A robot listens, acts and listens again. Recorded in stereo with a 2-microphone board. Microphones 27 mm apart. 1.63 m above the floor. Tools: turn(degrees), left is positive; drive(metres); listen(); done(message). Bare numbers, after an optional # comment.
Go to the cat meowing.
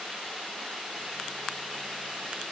listen()
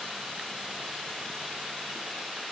listen()
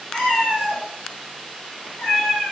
# The cat meowing: about 55° left or 125° left.
turn(55)
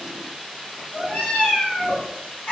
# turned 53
# So it is at 65° left.
turn(65)
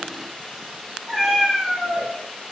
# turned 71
drive(1.0)
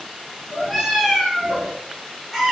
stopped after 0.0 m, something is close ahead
done("Blocked. The cat meowing is further on, straight ahead.")